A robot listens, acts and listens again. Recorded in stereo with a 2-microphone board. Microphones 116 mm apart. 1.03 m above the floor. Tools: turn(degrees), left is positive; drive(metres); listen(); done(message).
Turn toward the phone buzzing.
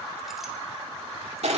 listen()
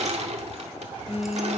turn(degrees=65)
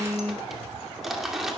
turn(degrees=15)
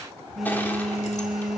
done("Facing the phone buzzing, 1 to 2 m away.")